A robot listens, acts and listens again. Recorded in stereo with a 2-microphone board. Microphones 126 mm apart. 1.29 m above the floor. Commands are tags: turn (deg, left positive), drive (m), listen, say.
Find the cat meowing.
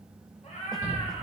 <turn deg="65"/>
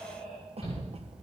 <say>Facing the cat meowing.</say>